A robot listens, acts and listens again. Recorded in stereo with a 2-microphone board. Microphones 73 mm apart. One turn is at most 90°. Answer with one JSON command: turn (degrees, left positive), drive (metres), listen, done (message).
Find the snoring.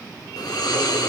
{"turn": 90}
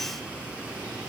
{"turn": -15}
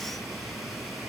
{"done": "Facing the snoring, 1 to 2 m away."}